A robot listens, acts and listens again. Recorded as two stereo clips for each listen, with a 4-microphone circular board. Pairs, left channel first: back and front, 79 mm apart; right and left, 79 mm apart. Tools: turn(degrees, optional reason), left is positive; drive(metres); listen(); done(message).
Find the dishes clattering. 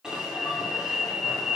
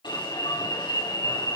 listen()
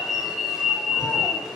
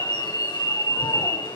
listen()
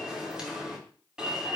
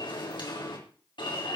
done("I can't make out dishes clattering, only an alarm.")